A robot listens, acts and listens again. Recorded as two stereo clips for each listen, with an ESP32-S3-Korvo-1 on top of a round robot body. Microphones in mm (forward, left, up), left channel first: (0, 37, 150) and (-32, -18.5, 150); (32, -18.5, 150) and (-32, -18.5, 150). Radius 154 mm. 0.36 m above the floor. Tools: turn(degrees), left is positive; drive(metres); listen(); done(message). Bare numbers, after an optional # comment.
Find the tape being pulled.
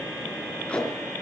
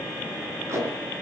# The tape being pulled: 135° left.
turn(135)
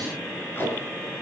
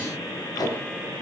done("Facing the tape being pulled.")